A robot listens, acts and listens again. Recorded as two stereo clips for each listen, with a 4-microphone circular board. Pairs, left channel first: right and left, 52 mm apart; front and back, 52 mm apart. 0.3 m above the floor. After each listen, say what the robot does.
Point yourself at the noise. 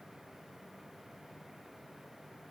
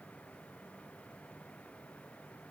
Keep listening.
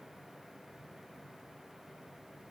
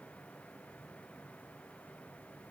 Keep listening.
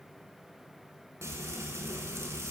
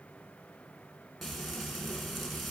Turn 90° left.
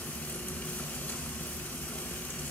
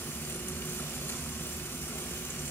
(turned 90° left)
Turn 30° right.
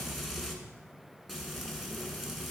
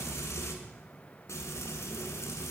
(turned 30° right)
Facing the frying, 1 to 2 m away.